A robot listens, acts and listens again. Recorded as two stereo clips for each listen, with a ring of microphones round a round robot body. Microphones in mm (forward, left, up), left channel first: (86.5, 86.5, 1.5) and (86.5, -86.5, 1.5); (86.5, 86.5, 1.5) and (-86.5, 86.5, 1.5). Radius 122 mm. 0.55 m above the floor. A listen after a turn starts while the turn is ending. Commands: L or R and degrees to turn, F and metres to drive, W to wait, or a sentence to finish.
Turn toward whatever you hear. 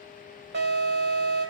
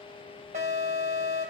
R120
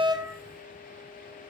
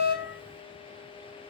W
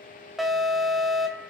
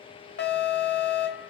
Found it: an alarm, straight ahead.